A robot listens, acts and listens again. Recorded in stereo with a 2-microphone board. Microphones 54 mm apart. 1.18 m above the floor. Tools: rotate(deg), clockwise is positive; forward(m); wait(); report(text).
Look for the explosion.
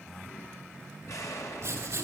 rotate(-75)
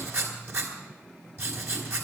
wait()
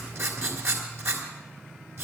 report("I heard an explosion, but can't make it out now. It was about straight ahead or 30° left.")